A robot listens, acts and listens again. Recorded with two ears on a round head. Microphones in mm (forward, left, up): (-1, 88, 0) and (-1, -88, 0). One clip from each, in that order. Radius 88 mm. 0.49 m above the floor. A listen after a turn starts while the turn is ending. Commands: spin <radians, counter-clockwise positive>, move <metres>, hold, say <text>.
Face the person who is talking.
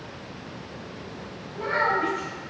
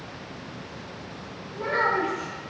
spin 1.31
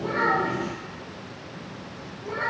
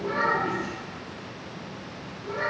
say Found it: a child speaking, straight ahead, 1 to 2 m away.